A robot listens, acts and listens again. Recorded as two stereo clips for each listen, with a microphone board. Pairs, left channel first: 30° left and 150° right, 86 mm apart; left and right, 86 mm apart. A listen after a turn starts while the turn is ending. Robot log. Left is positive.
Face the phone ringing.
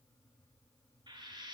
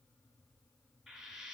cmd idle
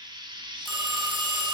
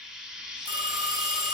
note: The phone ringing: 60° right.
cmd yaw -60
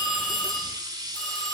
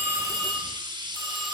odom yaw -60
end: Found it: a phone ringing, straight ahead.